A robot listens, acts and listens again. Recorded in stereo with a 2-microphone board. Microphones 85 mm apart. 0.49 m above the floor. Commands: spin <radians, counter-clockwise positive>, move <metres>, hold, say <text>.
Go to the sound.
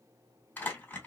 spin 0.35
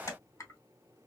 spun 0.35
spin 2.44
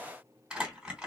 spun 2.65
spin -0.17
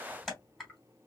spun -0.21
move 1.0
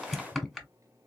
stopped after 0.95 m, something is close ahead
say Arrived at the crumpling, straight ahead.